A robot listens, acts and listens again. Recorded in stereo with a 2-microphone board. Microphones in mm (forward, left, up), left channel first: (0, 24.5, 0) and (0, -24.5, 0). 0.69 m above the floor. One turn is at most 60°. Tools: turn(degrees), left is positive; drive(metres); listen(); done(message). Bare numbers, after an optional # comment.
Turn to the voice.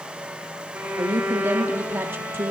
# The woman speaking: about 50° right or 130° right.
turn(-50)
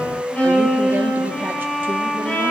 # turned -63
listen()
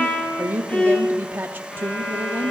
# So it is at 55° right.
turn(-55)
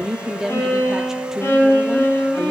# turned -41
# The woman speaking is now 15° right.
turn(-15)
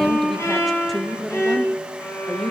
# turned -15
done("Found it: a woman speaking, straight ahead, under 1 m away.")